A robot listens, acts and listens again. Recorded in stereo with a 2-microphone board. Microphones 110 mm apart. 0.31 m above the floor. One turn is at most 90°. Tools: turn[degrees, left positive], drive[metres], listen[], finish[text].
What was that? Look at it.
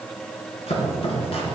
Thought: The chopping: about 60° left or 120° left.
Action: turn[60]
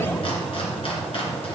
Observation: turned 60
Thought: So it is at 60° left.
Action: turn[60]
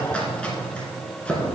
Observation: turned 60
Thought: The chopping is now 10° left.
Action: turn[10]
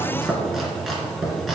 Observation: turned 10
Action: finish[Found it: chopping, straight ahead.]